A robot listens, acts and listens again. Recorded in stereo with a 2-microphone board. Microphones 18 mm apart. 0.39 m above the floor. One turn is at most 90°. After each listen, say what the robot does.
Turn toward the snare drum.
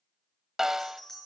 Turn 30° right.
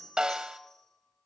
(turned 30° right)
Turn 90° right.
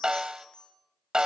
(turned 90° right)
Turn 55° right.
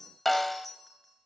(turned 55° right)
Turn 10° left.
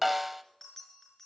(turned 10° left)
Facing the snare drum, under 1 m away.